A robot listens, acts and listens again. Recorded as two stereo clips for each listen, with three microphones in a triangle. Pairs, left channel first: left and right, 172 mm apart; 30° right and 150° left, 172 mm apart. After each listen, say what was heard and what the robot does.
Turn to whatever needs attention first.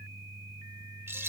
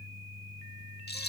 Keep listening.
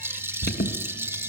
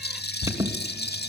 The alarm: 80° left. Turn 80° left.
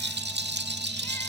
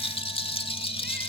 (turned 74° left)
Keep listening.
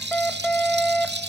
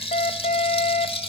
Facing the alarm, 2 to 4 m away.